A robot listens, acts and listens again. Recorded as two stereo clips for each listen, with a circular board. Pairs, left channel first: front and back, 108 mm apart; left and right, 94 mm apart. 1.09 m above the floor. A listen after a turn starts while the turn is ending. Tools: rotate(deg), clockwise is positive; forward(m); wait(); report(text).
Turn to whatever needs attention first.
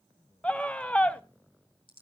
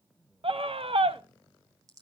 rotate(80)
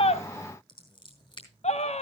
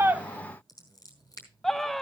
report("Facing the scream, under 1 m away.")